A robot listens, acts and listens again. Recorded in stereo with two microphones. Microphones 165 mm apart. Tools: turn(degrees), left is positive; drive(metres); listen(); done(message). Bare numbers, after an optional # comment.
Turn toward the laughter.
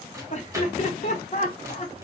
# The laughter: about 45° left or 135° left.
turn(45)
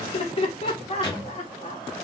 # The laughter: about 40° left or 140° left.
turn(40)
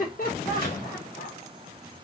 # So it is at 120° left.
turn(120)
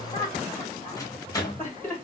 # The laughter is now 10° left.
turn(10)
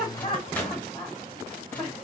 done("Facing the laughter.")